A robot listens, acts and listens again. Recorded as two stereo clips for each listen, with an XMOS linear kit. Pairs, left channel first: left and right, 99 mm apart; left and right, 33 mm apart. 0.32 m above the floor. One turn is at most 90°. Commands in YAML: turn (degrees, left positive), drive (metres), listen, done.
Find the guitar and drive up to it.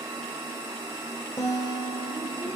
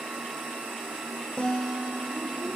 turn: 25
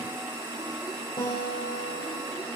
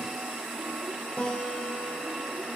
turn: 90
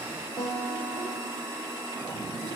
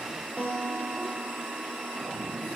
turn: 45
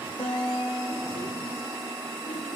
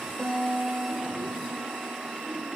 turn: 20
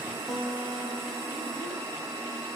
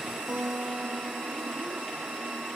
drive: 1.0
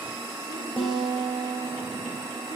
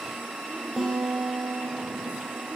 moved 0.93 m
drive: 1.0
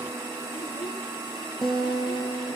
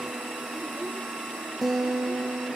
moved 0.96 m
drive: 1.0
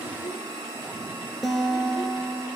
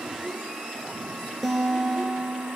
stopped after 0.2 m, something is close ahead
done: "I am next to the guitar."